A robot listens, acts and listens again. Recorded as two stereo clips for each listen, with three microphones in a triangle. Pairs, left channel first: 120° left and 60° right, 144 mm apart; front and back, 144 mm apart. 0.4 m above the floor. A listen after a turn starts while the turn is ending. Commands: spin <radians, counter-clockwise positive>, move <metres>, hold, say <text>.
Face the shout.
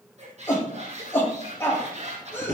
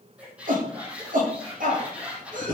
spin -2.88
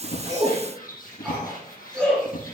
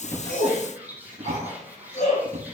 spin 0.61
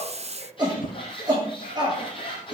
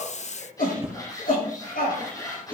say Found it: a shout, straight ahead, over 4 m away.